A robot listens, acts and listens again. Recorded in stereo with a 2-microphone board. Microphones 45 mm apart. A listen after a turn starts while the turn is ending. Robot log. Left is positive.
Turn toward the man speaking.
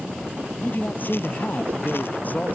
note: The man speaking: about 40° left or 140° left.
cmd yaw +40
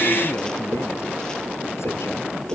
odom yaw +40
cmd idle
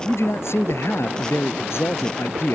note: So it is at 110° left.
cmd yaw +110
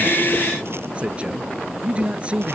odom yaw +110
note: The man speaking is now 25° right.
cmd yaw -25
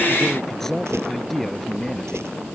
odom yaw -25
note: The man speaking is now 10° left.
cmd yaw +10
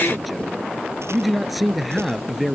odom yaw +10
end: Facing the man speaking.